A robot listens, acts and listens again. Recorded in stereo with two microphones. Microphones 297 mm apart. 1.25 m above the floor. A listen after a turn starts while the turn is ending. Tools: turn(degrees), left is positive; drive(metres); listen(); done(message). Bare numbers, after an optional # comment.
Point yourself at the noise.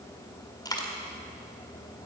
turn(30)
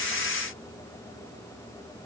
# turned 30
listen()
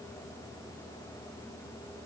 done("I heard a dropped coin, but can't make it out now. It was about 15° right or 135° left.")